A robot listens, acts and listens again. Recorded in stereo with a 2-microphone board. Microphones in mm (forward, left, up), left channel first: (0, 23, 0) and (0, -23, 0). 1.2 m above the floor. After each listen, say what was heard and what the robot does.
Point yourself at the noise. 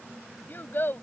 The child speaking: about 50° left or 130° left. Turn 50° left.
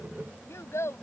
So it is at 80° left. Turn 80° left.
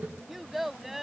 Facing the child speaking.